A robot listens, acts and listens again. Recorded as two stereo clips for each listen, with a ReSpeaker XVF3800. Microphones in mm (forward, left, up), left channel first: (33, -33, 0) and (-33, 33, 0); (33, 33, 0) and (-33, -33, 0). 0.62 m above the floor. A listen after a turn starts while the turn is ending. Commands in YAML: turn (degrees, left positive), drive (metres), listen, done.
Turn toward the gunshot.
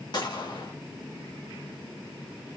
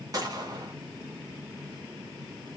turn: -85
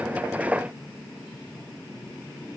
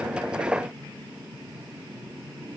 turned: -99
turn: 15
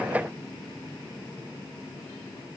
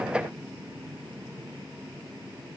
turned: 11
done: "Facing where the gunshot came from. I can't hear it now."